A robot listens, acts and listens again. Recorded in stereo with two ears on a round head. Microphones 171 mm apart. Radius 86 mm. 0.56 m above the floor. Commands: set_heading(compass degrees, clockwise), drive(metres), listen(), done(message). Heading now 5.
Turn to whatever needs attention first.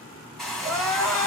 set_heading(335)
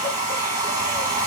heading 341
listen()
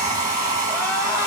listen()
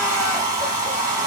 done("I heard crying, but can't make it out now. It was about 20° right or 150° left.")